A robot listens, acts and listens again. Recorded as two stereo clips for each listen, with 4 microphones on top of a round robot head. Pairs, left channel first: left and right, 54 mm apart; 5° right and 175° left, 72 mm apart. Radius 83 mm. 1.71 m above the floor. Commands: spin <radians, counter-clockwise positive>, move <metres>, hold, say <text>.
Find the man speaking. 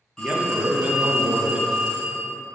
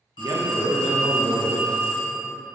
spin -2.53
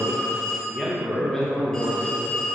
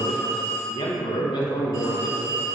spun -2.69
say Facing the man speaking, under 1 m away.